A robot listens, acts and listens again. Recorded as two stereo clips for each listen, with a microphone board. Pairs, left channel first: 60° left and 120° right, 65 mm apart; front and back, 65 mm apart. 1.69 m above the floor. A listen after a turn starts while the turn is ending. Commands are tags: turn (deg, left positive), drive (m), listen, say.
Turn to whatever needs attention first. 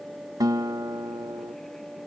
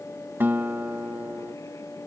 <listen/>
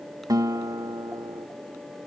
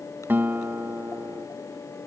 <listen/>
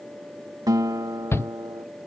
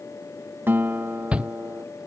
<turn deg="110"/>
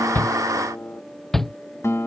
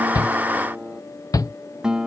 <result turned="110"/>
<turn deg="-25"/>
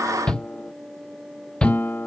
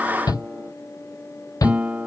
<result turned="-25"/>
<turn deg="-15"/>
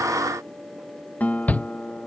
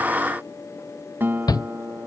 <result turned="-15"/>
<say>Facing the shout.</say>